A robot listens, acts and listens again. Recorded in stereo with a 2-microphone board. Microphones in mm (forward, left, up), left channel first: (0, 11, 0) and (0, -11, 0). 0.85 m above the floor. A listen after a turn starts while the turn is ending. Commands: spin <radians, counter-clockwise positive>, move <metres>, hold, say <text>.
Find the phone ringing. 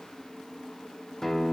hold
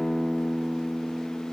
hold
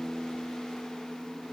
say I can't make out a phone ringing, only a guitar.